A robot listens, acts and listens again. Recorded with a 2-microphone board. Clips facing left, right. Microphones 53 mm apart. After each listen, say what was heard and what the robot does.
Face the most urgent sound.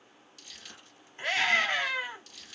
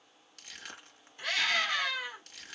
The scream: about 35° left or 145° left. Turn 35° left.
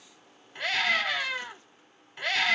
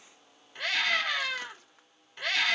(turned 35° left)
Found it: a scream, straight ahead, 2 to 4 m away.